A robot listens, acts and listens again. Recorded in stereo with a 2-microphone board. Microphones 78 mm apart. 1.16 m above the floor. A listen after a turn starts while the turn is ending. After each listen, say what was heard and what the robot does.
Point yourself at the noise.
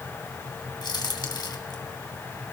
The crack: about 70° left or 110° left. Turn 70° left.
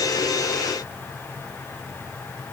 Keep listening.
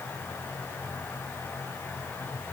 I heard a crack, but can't make it out now. It was about straight ahead or 40° left.